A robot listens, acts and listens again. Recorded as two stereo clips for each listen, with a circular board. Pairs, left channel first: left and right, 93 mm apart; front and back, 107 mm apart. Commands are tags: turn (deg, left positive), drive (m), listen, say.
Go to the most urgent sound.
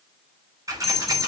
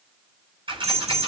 <turn deg="180"/>
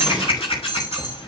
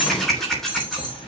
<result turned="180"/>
<turn deg="45"/>
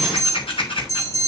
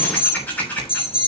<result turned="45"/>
<turn deg="35"/>
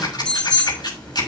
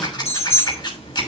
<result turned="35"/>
<drive m="1.0"/>
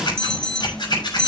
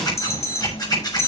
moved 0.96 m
<turn deg="10"/>
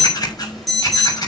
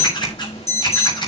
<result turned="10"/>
<drive m="1.0"/>
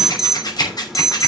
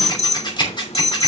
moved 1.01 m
<drive m="1.0"/>
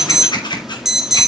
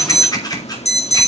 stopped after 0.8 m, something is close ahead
<say>I am next to the alarm.</say>